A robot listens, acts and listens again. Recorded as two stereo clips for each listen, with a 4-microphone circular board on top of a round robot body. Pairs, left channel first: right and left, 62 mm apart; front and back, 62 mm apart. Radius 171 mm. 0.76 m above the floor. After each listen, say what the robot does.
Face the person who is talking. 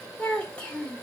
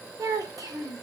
Turn 160° right.
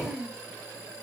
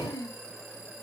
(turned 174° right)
Turn 10° left.
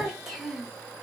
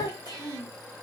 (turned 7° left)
Facing the child speaking.